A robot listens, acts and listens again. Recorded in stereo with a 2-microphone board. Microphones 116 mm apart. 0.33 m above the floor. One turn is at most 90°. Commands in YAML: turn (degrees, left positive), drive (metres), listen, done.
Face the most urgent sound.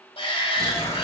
turn: 55
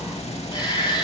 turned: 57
turn: 50
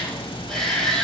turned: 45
done: "Found it: a shout, straight ahead."